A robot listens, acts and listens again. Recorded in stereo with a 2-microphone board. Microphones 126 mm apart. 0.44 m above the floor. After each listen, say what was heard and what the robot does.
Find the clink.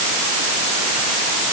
Keep listening.
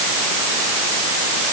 Keep listening.
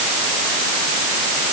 I can't make out a clink to turn to.